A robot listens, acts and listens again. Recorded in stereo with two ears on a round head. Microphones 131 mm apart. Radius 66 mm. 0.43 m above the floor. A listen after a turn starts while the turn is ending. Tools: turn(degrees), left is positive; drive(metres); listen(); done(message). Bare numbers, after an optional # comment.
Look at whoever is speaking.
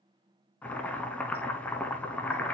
listen()
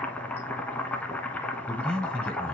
turn(30)
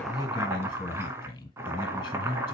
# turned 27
# So it is at 150° left.
turn(150)
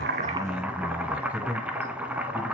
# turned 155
done("Found it: a man speaking, straight ahead, 1 to 2 m away.")